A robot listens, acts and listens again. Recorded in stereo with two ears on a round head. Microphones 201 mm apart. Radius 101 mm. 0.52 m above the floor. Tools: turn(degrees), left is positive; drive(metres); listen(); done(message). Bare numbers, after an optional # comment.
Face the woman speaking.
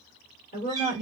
# The woman speaking: about 40° left or 140° left.
turn(40)
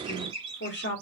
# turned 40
# The woman speaking: about 50° left or 130° left.
turn(50)
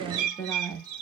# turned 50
done("Facing the woman speaking.")